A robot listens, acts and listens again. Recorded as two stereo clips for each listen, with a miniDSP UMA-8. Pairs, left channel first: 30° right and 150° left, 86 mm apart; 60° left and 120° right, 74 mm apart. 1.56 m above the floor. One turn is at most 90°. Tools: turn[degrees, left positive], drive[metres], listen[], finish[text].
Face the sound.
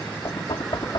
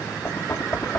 Action: finish[Found it: knocking, straight ahead.]